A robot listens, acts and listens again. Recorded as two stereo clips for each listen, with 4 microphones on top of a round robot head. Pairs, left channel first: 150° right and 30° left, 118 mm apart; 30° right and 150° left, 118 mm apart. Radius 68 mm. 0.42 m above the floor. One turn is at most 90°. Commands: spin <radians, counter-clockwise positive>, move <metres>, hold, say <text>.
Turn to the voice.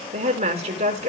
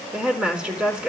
spin 1.13
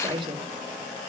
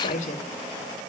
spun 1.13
spin -0.26
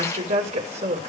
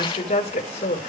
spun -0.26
say Facing the woman speaking, over 4 m away.